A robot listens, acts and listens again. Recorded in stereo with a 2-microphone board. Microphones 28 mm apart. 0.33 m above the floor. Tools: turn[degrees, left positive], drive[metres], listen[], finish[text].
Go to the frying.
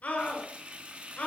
Thought: The frying: about 50° right or 130° right.
Action: turn[-50]
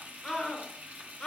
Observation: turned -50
Thought: So it is at 75° right.
Action: turn[-75]
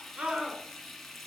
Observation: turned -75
Action: drive[1.0]
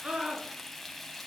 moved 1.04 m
Action: drive[1.0]
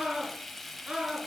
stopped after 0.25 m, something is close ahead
Action: finish[Arrived at the frying, straight ahead.]